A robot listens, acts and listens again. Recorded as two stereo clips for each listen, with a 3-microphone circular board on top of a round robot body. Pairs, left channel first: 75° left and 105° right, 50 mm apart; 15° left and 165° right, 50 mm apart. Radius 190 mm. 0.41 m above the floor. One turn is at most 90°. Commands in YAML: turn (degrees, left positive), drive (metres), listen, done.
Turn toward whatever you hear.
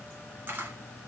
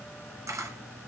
turn: -90
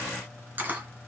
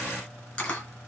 turn: -50
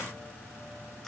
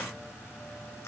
listen: true
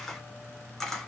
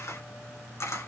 done: "Facing the camera shutter."